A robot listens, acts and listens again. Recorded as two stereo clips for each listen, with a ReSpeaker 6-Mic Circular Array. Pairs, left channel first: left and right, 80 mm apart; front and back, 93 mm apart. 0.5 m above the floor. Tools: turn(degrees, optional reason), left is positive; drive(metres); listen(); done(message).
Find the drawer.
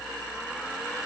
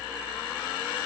listen()
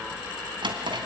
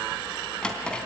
turn(degrees=-80, reason="The drawer: 80° right.")
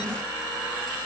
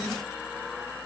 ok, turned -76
listen()
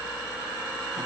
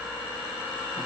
listen()
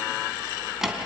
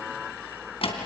done("Facing the drawer.")